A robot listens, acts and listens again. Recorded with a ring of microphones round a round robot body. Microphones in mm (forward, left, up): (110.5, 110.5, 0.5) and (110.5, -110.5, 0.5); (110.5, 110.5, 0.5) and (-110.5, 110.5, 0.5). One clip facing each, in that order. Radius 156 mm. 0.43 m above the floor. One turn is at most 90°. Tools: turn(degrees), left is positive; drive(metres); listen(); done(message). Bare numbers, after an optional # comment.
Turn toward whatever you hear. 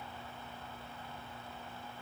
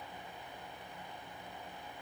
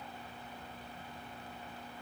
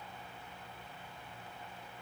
listen()
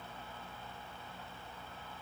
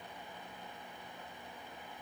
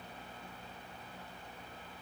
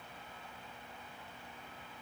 listen()
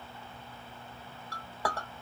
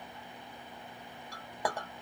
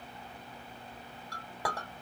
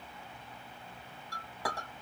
# The clink: 15° right.
turn(-15)
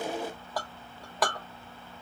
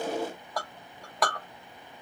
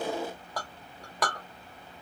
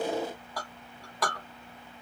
done("Facing the clink.")